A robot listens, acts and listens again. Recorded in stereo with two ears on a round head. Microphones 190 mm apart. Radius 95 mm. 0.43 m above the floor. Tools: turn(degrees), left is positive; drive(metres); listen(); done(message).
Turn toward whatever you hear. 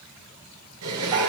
turn(degrees=-90)
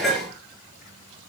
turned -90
done("Facing the dishes clattering, over 4 m away.")